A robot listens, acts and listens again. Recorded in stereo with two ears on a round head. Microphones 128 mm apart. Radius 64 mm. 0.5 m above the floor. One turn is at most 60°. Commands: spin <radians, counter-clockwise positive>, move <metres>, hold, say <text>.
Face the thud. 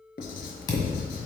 spin 0.52
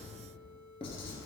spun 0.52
hold
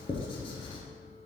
say I heard a thud, but can't make it out now. It was about straight ahead or 120° left.